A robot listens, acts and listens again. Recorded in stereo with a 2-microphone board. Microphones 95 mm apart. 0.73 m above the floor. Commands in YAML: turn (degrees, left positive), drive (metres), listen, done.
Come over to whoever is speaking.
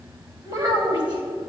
turn: -50
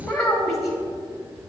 drive: 1.0
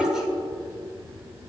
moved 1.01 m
drive: 1.0
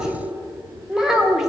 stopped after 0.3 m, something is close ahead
done: "I am next to the child speaking."